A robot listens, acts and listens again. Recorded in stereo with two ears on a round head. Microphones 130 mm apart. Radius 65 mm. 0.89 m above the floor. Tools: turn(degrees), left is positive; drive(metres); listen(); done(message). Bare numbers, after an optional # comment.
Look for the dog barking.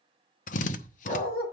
# The dog barking: about 40° left or 140° left.
turn(40)
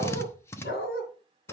# So it is at 100° left.
turn(100)
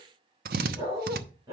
# The dog barking is now 25° right.
turn(-25)
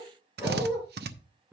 # The dog barking is now 10° right.
turn(-10)
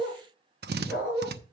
done("Found it: a dog barking, straight ahead.")